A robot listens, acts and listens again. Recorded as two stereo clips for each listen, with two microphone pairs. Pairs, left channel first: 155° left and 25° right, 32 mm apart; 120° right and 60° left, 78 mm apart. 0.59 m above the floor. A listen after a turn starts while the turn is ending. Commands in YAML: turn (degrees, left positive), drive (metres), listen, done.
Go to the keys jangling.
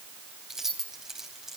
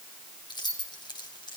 turn: -95
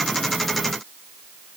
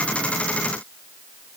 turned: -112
turn: 15
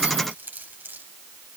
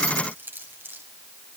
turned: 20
drive: 1.0
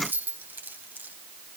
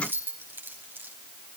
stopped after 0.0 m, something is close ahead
done: "Blocked. The keys jangling is further on, straight ahead."